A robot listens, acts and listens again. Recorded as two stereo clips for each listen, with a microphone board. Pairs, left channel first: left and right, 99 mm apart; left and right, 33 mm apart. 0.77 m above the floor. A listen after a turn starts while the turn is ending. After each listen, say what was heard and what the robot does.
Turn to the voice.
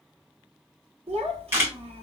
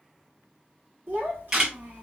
The child speaking: about 65° right or 115° right. Turn 65° right.
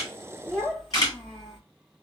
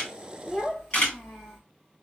Found it: a child speaking, straight ahead.